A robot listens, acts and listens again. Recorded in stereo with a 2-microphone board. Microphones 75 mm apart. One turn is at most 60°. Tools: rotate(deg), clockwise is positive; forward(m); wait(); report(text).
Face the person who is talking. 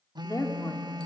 rotate(-55)
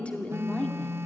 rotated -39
rotate(-15)
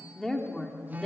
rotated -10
report("Facing the woman speaking.")